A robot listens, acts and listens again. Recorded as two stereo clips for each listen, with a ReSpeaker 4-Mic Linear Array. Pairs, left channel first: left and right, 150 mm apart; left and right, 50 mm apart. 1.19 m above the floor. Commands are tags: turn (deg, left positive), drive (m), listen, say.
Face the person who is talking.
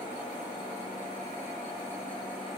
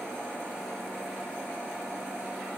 <listen/>
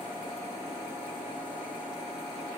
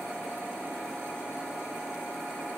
<listen/>
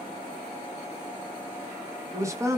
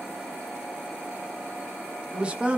<turn deg="-20"/>
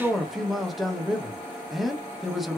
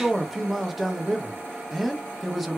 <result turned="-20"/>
<say>Found it: a man speaking, straight ahead, under 1 m away.</say>